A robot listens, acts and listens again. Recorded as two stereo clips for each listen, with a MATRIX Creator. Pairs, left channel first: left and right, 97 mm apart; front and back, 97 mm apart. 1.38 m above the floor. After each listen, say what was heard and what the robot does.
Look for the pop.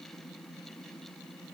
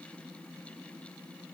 Keep listening.
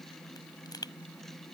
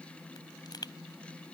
The pop: 45° left. Turn 45° left.
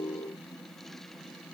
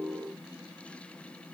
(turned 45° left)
I heard a pop from this way, but can't make it out now.